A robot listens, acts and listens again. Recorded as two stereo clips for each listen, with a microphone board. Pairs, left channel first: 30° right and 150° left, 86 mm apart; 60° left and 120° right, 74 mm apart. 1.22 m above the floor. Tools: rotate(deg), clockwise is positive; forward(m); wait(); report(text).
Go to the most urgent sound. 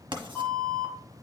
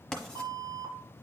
rotate(100)
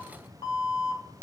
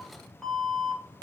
rotate(25)
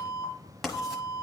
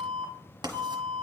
forward(1.0)
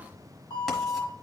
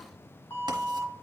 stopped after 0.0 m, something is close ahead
report("Blocked. The alarm is further on, straight ahead.")